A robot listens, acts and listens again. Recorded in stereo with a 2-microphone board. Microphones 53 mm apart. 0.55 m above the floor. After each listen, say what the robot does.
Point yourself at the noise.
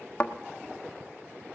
Turn 20° left.
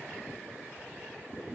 Keep listening.
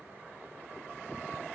I heard a thud, but can't make it out now. It was about straight ahead or 140° left.